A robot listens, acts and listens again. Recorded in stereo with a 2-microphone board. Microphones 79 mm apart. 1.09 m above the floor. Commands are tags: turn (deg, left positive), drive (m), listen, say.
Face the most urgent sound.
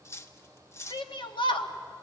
<turn deg="90"/>
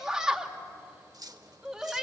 <turn deg="-10"/>
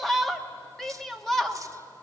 <say>Found it: a shout, straight ahead.</say>